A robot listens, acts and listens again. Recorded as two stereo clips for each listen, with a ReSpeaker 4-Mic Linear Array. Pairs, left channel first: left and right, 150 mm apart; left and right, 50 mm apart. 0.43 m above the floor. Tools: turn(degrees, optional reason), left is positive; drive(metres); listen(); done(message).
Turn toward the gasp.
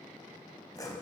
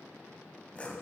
listen()
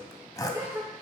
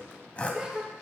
turn(degrees=-15, reason="The gasp: about 15° right or 165° right.")
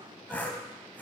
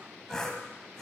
listen()
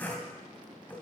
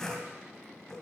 done("I heard a gasp, but can't make it out now. It was about straight ahead or 150° right.")